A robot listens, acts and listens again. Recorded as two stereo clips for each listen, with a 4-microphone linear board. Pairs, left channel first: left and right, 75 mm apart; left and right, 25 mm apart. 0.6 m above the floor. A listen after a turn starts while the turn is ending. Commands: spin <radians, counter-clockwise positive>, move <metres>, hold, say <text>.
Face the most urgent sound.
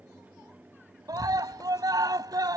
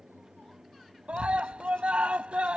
spin -0.96
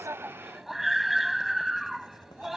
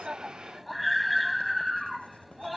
say Found it: a scream, straight ahead.